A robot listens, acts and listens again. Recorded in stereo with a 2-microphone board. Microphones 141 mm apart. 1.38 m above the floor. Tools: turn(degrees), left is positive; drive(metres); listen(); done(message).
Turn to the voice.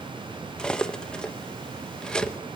listen()
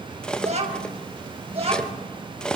turn(degrees=-45)
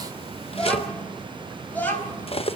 turn(degrees=15)
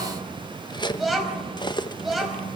done("Facing the child speaking.")